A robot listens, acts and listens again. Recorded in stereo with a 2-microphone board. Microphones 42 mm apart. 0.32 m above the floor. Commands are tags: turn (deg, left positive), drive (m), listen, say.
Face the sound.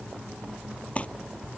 <turn deg="30"/>
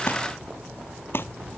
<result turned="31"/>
<turn deg="120"/>
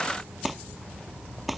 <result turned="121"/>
<say>Facing the crumpling.</say>